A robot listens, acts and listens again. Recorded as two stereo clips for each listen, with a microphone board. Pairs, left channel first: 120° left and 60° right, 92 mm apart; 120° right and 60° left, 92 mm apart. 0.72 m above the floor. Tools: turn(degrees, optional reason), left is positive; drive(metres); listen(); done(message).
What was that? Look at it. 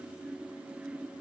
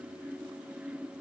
listen()
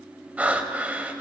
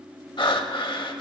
turn(degrees=-135, reason="The breathing: 135° right.")
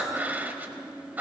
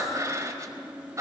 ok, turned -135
turn(degrees=10, reason="The breathing is now 10° left.")
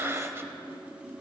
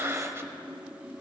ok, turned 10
done("Found it: breathing, straight ahead, under 1 m away.")